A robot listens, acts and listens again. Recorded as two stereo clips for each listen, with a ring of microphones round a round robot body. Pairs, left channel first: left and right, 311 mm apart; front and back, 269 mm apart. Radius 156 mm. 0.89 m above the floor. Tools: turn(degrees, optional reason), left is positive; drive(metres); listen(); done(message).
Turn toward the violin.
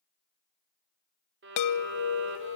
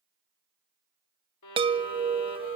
turn(degrees=-35, reason="The violin: 35° right.")
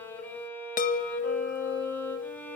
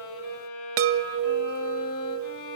done("Found it: a violin, straight ahead, 2 to 4 m away.")